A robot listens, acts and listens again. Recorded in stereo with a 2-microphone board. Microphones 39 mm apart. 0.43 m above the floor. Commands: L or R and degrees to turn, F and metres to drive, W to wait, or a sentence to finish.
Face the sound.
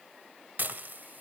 R50
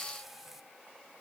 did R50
W
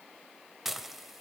R10
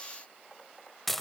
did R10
Facing the dishes clattering, 1 to 2 m away.